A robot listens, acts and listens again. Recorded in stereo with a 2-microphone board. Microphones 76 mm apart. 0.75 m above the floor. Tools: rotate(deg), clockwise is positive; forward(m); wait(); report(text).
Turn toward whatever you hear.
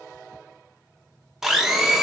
rotate(30)
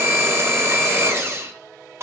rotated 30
rotate(145)
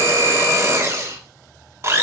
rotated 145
rotate(40)
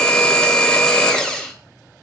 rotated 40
rotate(-10)
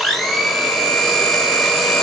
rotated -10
report("Found it: a blender, straight ahead, under 1 m away.")